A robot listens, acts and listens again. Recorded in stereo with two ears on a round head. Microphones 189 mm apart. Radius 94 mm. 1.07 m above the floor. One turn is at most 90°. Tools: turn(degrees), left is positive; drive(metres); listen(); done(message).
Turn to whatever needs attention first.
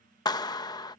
listen()
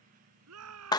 turn(degrees=-90)
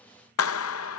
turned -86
listen()
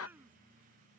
listen()
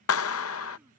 done("I heard a shout from this way, but can't make it out now.")